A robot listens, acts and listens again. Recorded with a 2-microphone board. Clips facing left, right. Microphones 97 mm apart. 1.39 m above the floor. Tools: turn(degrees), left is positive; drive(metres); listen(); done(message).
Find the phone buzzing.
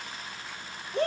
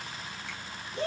listen()
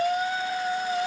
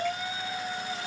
listen()
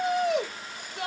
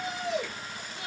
done("I can't make out a phone buzzing to turn to.")